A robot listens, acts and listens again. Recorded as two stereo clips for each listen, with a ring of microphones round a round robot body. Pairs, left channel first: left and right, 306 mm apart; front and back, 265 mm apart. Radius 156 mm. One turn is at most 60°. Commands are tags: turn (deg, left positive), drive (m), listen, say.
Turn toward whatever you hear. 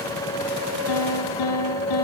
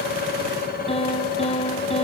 <turn deg="60"/>
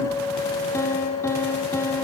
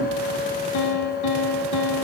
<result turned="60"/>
<turn deg="10"/>
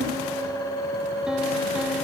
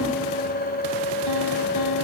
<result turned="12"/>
<listen/>
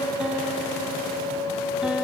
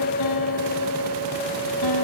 <listen/>
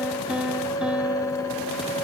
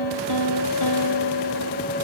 <say>Found it: a piano, straight ahead, 2 to 4 m away.</say>